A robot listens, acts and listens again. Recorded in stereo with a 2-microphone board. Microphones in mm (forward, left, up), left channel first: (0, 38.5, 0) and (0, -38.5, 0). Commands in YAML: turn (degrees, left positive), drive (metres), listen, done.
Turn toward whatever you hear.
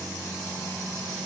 listen: true
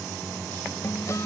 turn: 45
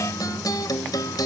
turn: 80
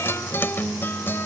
turn: 35
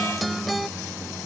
done: "Found it: a guitar, straight ahead."